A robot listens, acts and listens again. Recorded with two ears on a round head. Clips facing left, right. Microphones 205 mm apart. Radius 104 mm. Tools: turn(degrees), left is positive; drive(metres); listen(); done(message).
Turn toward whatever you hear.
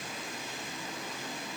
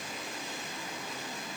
listen()
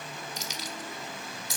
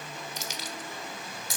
turn(degrees=-45)
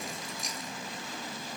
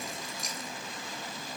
done("Found it: keys jangling, straight ahead, 1 to 2 m away.")